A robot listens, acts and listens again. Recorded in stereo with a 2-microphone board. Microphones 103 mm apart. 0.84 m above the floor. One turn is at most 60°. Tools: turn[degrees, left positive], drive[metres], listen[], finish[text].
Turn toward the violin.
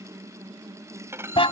Thought: The violin: about 25° right or 155° right.
Action: turn[-25]
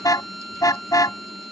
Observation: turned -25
Action: finish[Found it: a violin, straight ahead.]